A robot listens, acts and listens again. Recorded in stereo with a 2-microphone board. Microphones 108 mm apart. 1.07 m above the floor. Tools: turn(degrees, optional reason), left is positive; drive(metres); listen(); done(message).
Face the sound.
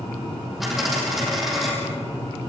turn(degrees=30)
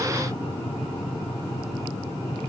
listen()
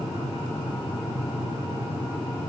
done("I heard a dropped coin, but can't make it out now. It was about 30° right or 150° left.")